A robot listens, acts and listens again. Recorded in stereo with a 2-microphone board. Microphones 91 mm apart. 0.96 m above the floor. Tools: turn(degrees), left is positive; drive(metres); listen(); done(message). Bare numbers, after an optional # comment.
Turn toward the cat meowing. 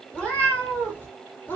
# The cat meowing: about 20° left or 160° left.
turn(20)
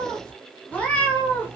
# The cat meowing: about 25° left or 155° left.
turn(25)
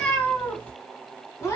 # The cat meowing: about 30° left or 150° left.
turn(30)
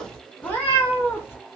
# The cat meowing: about 25° left or 155° left.
turn(25)
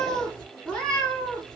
turn(30)
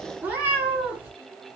# So it is at 20° right.
turn(-20)
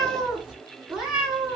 done("Found it: a cat meowing, straight ahead, 1 to 2 m away.")